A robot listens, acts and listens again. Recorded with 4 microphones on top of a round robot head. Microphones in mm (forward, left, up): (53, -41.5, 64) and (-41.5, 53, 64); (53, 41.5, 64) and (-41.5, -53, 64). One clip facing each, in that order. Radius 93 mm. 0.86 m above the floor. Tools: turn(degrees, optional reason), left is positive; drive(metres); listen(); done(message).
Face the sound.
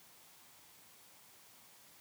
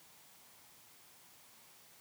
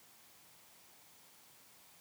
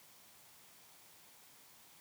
listen()
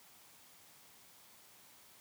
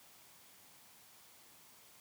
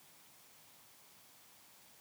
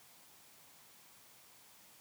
listen()
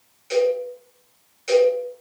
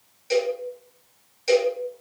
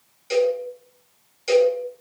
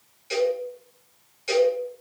turn(degrees=85, reason="The cowbell: 85° left.")
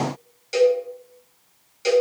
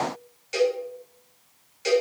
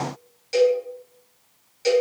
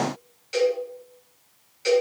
done("Facing the cowbell, 1 to 2 m away.")